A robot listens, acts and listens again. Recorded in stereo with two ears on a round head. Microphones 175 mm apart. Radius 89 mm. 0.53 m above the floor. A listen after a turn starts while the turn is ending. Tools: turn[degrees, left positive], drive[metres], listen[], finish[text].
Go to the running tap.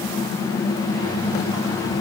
Action: listen[]
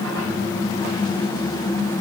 Action: listen[]
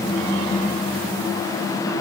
Action: finish[I can't make out a running tap.]